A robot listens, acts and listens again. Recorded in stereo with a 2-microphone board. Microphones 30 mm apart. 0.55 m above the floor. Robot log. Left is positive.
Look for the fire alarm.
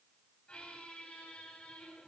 cmd idle
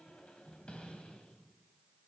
cmd idle
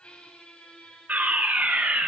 note: The fire alarm: about 55° right or 125° right.
cmd yaw -55
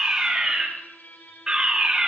note: So it is at 25° right.
cmd yaw -25
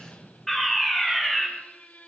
note: The fire alarm is now 10° left.
cmd yaw +10
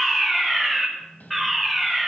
end: Found it: a fire alarm, straight ahead, 2 to 4 m away.